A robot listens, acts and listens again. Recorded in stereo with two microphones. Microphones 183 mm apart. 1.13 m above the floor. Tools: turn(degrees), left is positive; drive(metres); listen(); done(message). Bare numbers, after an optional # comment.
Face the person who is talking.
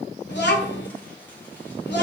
# The child speaking: about 65° left or 115° left.
turn(65)
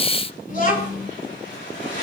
# So it is at 45° left.
turn(45)
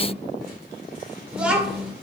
done("Found it: a child speaking, straight ahead, 2 to 4 m away.")